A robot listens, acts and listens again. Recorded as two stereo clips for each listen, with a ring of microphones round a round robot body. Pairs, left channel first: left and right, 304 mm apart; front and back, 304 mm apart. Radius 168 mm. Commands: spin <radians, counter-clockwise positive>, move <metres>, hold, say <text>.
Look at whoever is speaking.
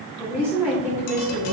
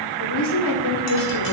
say Found it: a woman speaking, straight ahead.